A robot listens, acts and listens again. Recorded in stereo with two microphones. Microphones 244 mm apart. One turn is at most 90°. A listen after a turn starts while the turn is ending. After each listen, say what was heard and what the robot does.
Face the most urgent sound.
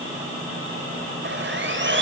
Keep listening.
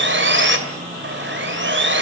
Keep listening.
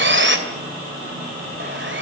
I can't make out anything urgent, only sawing.